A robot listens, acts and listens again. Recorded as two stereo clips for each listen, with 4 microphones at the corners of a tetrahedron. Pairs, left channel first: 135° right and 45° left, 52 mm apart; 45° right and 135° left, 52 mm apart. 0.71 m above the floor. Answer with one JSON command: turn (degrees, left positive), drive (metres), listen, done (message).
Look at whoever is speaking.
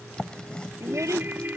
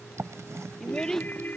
{"turn": 35}
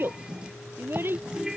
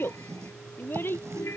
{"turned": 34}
{"done": "Found it: a child speaking, straight ahead."}